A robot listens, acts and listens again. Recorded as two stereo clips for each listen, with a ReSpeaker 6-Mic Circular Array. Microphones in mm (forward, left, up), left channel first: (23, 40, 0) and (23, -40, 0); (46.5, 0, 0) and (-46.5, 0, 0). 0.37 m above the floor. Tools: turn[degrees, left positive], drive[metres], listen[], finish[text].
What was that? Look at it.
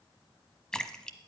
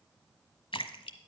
Thought: The splash: 10° left.
Action: turn[10]
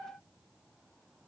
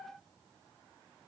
Action: finish[I heard a splash from this way, but can't make it out now.]